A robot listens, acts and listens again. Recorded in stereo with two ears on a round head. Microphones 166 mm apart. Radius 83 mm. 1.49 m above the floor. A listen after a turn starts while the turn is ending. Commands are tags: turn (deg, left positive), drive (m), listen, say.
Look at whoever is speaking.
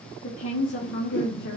<turn deg="65"/>
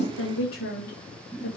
<turn deg="60"/>
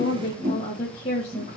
<turn deg="35"/>
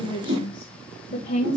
<turn deg="40"/>
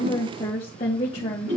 <turn deg="30"/>
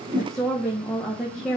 <say>Found it: a woman speaking, straight ahead, 1 to 2 m away.</say>